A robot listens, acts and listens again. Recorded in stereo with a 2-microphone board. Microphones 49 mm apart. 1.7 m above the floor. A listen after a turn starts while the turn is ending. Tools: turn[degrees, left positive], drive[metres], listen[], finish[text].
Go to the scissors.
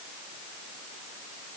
Action: listen[]
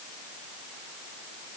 Action: listen[]
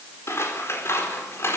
Thought: The scissors: about 65° left or 115° left.
Action: turn[65]
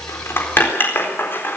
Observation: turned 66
Thought: So it is at 50° left.
Action: turn[50]
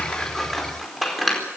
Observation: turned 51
Action: drive[1.0]
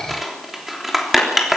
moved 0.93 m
Action: drive[1.0]
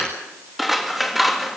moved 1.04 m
Action: drive[1.0]
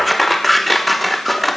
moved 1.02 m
Action: drive[1.0]
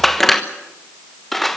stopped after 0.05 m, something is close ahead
Action: finish[Arrived at the scissors, straight ahead.]